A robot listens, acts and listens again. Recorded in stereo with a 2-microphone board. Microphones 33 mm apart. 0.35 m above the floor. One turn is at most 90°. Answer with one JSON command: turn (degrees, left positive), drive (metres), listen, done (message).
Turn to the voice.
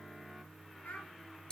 {"turn": 90}
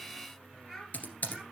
{"done": "Facing the child speaking, over 4 m away."}